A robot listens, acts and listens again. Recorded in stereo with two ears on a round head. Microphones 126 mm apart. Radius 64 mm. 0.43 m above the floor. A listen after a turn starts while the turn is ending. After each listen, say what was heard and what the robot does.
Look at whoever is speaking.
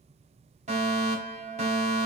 Keep listening.
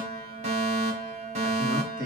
The man speaking: about 65° right or 115° right. Turn 65° right.
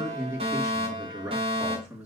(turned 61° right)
Found it: a man speaking, straight ahead, over 4 m away.